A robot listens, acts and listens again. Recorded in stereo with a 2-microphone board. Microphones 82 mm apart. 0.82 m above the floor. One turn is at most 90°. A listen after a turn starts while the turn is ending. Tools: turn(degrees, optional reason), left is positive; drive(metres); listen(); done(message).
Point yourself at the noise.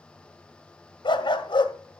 turn(degrees=90)
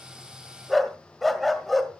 done("Found it: a dog barking, straight ahead.")